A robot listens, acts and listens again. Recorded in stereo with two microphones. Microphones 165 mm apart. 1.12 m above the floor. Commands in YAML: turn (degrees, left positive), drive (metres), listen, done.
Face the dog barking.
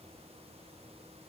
listen: true
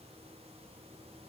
listen: true
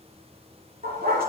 turn: -65
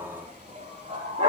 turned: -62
turn: -50
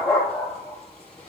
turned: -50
done: "Facing the dog barking, over 4 m away."